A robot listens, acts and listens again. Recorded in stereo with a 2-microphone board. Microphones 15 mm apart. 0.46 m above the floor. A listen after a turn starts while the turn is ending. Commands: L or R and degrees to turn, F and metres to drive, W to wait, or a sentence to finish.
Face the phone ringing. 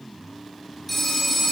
L30
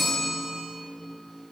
L150
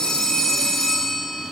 L35
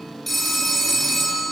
Facing the phone ringing, over 4 m away.